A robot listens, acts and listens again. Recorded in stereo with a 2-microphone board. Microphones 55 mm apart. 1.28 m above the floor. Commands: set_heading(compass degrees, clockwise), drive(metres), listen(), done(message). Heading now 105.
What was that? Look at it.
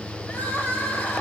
set_heading(70)
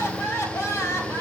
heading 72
set_heading(322)
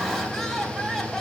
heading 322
done("Found it: crying, straight ahead.")